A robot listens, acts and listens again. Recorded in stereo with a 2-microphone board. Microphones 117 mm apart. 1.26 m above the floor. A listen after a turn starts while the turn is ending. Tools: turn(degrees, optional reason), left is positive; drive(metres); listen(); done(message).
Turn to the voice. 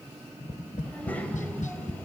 turn(degrees=30)
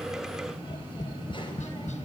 turn(degrees=140, reason="So it is at 140° left.")
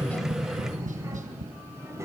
turn(degrees=-25, reason="The child speaking is now 25° right.")
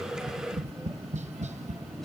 done("Facing the child speaking, over 4 m away.")